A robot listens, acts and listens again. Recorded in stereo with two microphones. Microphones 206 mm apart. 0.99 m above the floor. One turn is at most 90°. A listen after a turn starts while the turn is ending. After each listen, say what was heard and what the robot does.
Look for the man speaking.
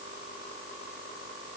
Keep listening.
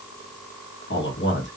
The man speaking: about 75° left or 105° left. Turn 75° left.
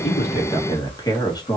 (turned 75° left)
So it is at 20° left. Turn 20° left.
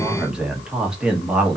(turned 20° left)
Found it: a man speaking, straight ahead.